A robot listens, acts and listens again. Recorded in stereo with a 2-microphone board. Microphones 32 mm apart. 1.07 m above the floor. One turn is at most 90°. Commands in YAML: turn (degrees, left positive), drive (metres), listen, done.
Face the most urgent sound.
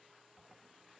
listen: true
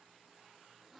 listen: true
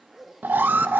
turn: -90
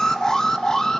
turn: 15
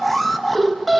done: "Found it: an alarm, straight ahead, under 1 m away."